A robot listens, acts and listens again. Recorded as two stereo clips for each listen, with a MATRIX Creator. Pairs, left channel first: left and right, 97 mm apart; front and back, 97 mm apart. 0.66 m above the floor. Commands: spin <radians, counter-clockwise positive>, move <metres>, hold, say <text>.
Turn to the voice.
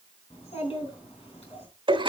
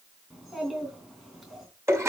spin 1.57
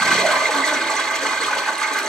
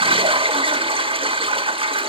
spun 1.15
spin 0.44
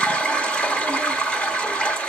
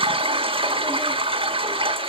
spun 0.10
spin 0.35
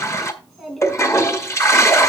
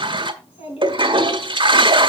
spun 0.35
say Found it: a child speaking, straight ahead.